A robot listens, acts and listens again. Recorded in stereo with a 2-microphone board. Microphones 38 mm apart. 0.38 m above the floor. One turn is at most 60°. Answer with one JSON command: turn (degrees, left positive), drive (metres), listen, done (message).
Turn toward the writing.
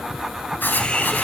{"turn": 60}
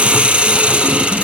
{"turn": 50}
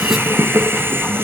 {"listen": true}
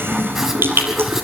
{"listen": true}
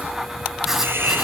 {"turn": -10}
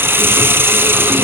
{"listen": true}
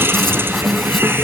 {"listen": true}
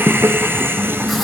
{"done": "I heard writing from this way, but can't make it out now."}